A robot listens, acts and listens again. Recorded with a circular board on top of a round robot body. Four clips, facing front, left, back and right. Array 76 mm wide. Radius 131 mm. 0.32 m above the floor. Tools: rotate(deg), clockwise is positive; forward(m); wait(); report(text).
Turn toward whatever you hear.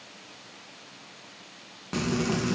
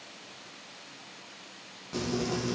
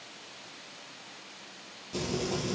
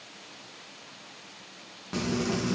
rotate(15)
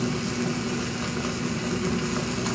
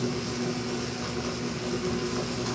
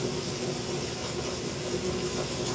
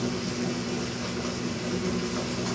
report("Found it: frying, straight ahead, over 4 m away.")